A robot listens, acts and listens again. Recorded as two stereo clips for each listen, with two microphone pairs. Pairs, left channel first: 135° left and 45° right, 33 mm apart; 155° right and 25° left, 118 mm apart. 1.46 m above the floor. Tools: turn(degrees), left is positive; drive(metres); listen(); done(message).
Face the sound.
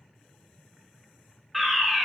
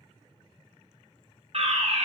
turn(degrees=40)
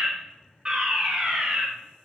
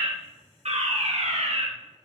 turn(degrees=20)
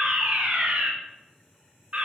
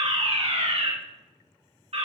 done("Facing the fire alarm, 2 to 4 m away.")